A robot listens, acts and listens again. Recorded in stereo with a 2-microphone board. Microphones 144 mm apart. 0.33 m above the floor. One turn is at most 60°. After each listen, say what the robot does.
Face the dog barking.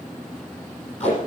Keep listening.
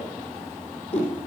Keep listening.
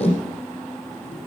I can't make out a dog barking to turn to.